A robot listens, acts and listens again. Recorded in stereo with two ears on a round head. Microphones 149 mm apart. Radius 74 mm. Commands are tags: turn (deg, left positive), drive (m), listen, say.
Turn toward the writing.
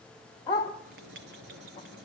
<turn deg="-90"/>
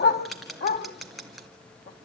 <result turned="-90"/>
<say>Facing the writing, 2 to 4 m away.</say>